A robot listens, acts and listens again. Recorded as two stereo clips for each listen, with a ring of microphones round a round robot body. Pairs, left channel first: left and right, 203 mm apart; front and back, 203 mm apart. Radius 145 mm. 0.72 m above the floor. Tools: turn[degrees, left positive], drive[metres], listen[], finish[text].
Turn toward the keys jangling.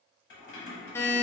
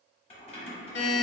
Thought: The keys jangling: 65° left.
Action: turn[65]
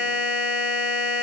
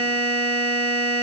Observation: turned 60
Action: listen[]
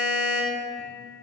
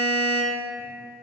Action: listen[]
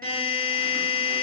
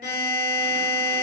Action: finish[Facing where the keys jangling came from. I can't hear it now.]